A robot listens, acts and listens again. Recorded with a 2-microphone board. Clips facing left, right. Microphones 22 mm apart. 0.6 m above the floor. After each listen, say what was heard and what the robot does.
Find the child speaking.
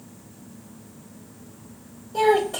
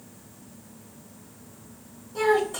The child speaking: about 65° left or 115° left. Turn 65° left.
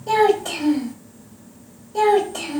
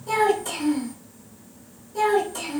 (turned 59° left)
So it is at 55° left. Turn 55° left.
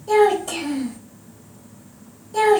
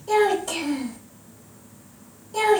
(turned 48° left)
The child speaking is now 10° left. Turn 10° left.
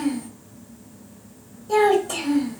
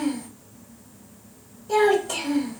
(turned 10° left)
Found it: a child speaking, straight ahead, 1 to 2 m away.